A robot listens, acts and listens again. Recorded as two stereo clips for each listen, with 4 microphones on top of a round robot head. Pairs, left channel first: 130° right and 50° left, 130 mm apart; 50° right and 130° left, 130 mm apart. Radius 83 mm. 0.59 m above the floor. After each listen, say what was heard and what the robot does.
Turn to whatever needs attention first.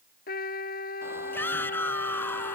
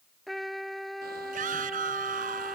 The shout: 155° left. Turn 155° left.
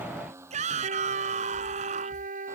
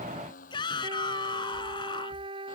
The shout is now 10° left. Turn 10° left.
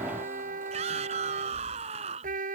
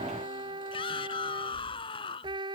Found it: a shout, straight ahead.